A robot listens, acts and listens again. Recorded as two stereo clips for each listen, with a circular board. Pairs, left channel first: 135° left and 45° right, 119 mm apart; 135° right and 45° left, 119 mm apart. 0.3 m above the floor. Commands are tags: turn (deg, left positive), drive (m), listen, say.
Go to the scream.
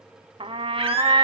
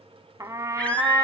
<turn deg="-60"/>
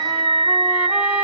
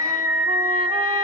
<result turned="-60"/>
<turn deg="-15"/>
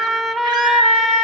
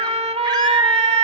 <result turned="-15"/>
<drive m="1.0"/>
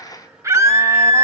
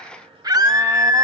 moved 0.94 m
<turn deg="10"/>
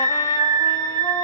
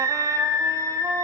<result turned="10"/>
<drive m="1.0"/>
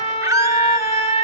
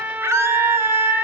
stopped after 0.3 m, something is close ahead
<say>I am next to the scream.</say>